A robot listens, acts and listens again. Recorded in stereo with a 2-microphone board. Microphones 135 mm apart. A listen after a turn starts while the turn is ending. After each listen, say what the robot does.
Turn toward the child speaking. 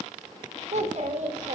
Turn 55° right.
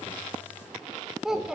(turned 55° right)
Found it: a child speaking, straight ahead, under 1 m away.